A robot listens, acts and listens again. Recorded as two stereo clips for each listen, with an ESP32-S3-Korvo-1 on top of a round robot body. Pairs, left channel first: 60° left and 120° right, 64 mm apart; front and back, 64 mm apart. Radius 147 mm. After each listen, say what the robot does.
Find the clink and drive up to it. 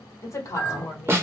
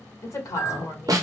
Drive 1.0 m forward.
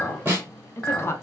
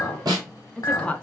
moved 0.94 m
Turn 15° right.
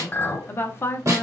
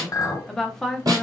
Drive 1.0 m forward.
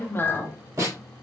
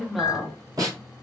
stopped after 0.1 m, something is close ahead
Turn 10° left.
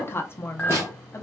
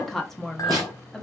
Arrived at the clink, straight ahead.